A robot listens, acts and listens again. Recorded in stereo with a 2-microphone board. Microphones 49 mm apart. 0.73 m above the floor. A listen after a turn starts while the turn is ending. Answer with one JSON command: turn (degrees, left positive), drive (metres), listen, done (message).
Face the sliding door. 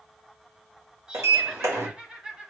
{"turn": -90}
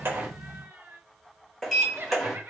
{"turn": 10}
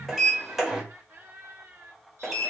{"done": "Facing the sliding door."}